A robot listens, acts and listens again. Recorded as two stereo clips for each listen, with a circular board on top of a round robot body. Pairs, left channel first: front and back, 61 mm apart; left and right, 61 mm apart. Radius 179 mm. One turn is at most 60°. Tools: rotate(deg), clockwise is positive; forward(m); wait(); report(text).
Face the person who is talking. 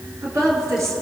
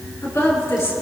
rotate(-60)
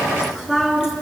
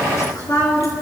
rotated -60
rotate(-60)
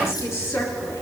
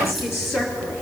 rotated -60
rotate(-45)
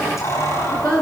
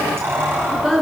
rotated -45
report("Found it: a woman speaking, straight ahead.")